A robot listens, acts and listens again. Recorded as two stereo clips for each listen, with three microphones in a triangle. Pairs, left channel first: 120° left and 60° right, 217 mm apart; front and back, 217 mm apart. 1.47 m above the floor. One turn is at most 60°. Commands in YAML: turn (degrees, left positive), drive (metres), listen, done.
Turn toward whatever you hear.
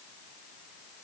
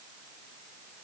listen: true
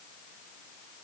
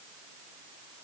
listen: true
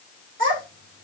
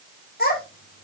turn: -40
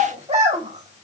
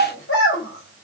done: "Found it: a child speaking, straight ahead."